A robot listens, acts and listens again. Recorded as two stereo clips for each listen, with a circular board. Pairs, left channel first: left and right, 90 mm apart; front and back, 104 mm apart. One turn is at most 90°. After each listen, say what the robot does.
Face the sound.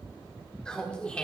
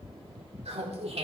Turn 90° left.
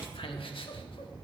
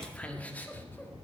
Turn 70° left.
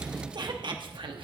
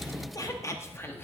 Turn 70° right.
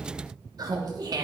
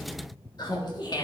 Turn 45° right.
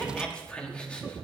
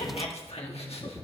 Turn 10° left.
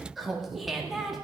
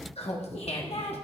Facing the laughter, 1 to 2 m away.